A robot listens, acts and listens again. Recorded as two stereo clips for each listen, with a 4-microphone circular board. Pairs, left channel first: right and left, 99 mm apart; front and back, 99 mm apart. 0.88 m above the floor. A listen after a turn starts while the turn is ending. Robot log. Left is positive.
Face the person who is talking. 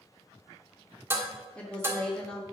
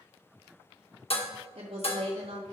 note: The woman speaking: 175° right.
cmd yaw -175
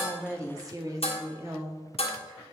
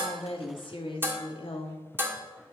note: The woman speaking is now 25° left.
cmd yaw +25
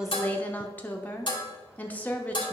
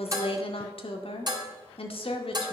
note: The woman speaking is now 15° right.
cmd yaw -15
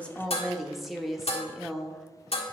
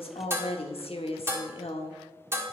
end: Facing the woman speaking, 1 to 2 m away.